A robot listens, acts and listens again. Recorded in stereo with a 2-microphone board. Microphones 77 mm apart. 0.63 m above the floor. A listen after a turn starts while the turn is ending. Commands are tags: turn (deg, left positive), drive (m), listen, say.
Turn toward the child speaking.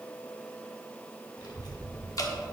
<turn deg="65"/>
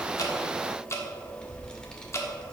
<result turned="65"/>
<turn deg="15"/>
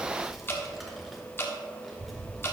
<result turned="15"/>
<say>Facing the child speaking, 1 to 2 m away.</say>